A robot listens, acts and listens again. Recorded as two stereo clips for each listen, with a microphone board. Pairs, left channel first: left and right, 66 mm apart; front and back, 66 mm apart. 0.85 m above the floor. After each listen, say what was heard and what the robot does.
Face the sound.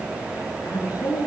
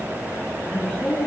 The woman speaking: 80° left. Turn 80° left.
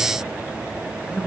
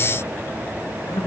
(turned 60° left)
The woman speaking is now 20° left. Turn 20° left.
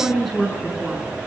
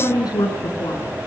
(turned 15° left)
Found it: a woman speaking, straight ahead.